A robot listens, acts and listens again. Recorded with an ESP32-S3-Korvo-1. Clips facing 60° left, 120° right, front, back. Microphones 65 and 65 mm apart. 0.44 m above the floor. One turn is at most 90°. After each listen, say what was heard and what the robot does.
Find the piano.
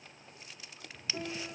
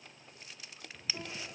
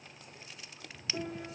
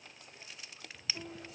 Keep listening.
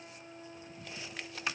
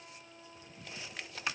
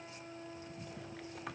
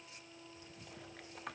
Facing the piano.